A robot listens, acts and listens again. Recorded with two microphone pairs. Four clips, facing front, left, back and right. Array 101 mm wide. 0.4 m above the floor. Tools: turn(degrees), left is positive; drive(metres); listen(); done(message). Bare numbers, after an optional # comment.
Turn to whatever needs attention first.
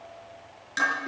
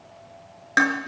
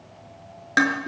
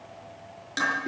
listen()
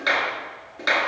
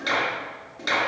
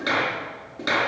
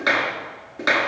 listen()
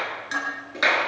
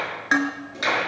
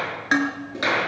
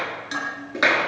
done("I can't make out anything urgent, only dishes clattering and a clap.")